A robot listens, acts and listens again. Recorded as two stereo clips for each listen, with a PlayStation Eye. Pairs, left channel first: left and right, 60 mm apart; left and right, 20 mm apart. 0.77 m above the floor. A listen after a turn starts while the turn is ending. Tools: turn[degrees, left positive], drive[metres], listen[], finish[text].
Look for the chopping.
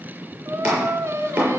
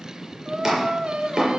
Thought: The chopping: about 20° right or 160° right.
Action: turn[-20]
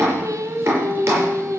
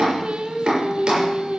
Thought: So it is at 140° right.
Action: turn[-140]
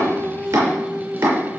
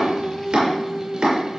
Thought: The chopping is now 60° right.
Action: turn[-60]
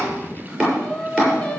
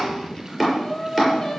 Thought: The chopping is now 20° right.
Action: turn[-20]
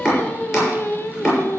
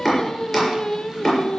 Action: finish[Found it: chopping, straight ahead, over 4 m away.]